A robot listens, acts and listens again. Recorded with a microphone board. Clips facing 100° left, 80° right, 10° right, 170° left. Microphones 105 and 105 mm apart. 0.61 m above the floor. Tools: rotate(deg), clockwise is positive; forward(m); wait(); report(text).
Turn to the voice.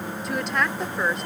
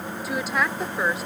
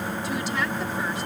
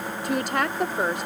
rotate(165)
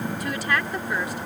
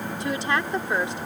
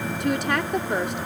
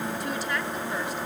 rotate(20)
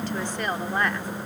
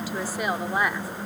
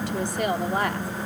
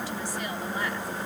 report("Facing the woman speaking.")